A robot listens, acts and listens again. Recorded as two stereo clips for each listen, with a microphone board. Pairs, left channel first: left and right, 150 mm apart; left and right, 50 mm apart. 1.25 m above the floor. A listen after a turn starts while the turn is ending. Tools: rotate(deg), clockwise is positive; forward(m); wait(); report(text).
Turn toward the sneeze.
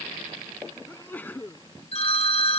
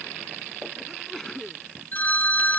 rotate(-30)
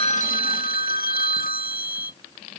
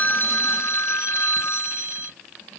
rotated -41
wait()
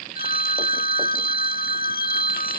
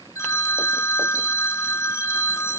report("I heard a sneeze, but can't make it out now. It was about 30° right or 130° left.")